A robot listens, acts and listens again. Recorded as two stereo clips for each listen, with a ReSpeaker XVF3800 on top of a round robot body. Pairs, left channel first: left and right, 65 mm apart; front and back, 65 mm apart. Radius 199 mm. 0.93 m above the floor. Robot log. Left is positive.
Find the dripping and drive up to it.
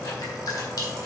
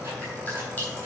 note: The dripping: 70° left.
cmd yaw +70
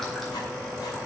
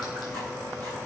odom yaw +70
cmd idle
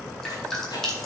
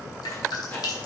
note: The dripping is now 10° left.
cmd yaw +10
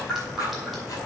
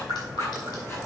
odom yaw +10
cmd fwd 1.0
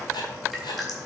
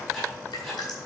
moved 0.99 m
cmd fwd 1.0
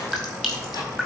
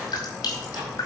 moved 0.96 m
cmd fwd 1.0
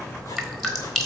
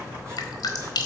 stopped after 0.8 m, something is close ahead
end: I am next to the dripping.